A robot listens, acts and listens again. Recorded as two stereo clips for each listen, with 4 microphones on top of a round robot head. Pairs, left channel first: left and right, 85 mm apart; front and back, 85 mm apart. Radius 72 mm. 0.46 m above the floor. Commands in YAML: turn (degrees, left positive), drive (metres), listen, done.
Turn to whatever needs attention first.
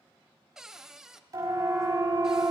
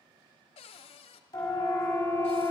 turn: -45
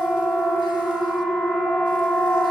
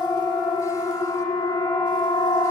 turn: 15
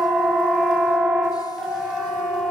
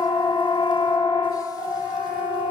turn: 10
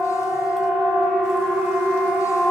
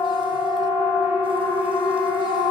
done: "Facing the siren, over 4 m away."